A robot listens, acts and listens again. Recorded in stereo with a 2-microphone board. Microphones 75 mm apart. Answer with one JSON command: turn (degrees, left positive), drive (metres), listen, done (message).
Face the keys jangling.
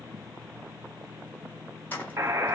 {"turn": 20}
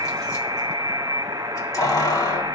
{"turn": 135}
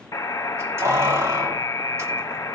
{"turn": -35}
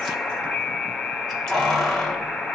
{"turn": 10}
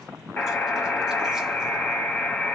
{"listen": true}
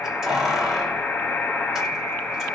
{"done": "Found it: keys jangling, straight ahead, 1 to 2 m away."}